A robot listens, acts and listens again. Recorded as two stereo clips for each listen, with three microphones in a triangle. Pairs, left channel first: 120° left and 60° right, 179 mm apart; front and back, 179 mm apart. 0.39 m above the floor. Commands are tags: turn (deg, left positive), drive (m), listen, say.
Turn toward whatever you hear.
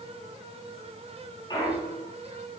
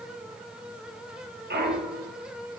<turn deg="-175"/>
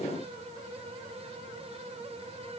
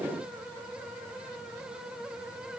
<say>Facing where the clunk came from. I can't hear it now.</say>